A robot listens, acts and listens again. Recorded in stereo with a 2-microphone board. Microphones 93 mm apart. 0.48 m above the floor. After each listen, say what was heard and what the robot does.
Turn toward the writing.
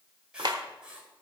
Turn 30° right.
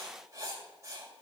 So it is at 140° right. Turn 140° right.
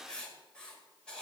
The writing is now 10° left. Turn 10° left.
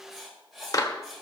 Found it: writing, straight ahead, 1 to 2 m away.